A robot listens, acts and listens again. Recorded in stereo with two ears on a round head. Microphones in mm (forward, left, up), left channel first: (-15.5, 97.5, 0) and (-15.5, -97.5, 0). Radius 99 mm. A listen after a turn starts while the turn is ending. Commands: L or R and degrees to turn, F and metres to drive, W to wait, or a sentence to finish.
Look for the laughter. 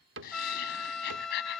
L50
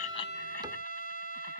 W
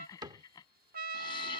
L20
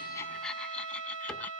W
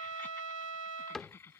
L10
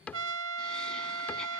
W
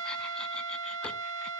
W
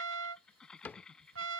Facing the laughter.